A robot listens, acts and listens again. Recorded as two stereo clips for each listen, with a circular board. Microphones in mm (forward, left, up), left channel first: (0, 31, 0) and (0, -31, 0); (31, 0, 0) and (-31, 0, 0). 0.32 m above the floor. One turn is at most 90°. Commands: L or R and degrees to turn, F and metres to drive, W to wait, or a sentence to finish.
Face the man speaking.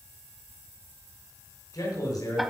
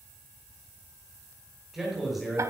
L90
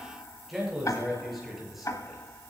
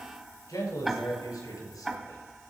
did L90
Found it: a man speaking, straight ahead.